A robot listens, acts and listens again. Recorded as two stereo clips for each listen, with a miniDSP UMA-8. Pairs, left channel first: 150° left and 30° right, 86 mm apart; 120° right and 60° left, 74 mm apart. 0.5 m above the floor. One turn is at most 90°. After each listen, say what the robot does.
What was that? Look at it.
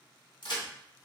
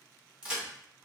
Turn 90° left.
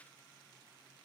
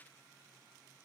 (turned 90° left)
Turn 50° left.
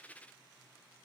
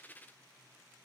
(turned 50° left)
Facing where the crack came from. I can't hear it now.